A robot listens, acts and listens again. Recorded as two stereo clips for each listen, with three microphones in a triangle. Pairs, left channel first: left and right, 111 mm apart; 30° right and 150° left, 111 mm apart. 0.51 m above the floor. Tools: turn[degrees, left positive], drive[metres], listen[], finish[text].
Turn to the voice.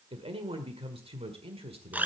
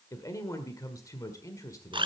Thought: The man speaking: 85° right.
Action: turn[-85]
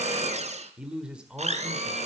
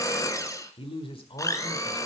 Thought: The man speaking is now 10° right.
Action: turn[-10]
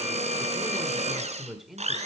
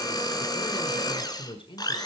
Action: finish[Found it: a man speaking, straight ahead.]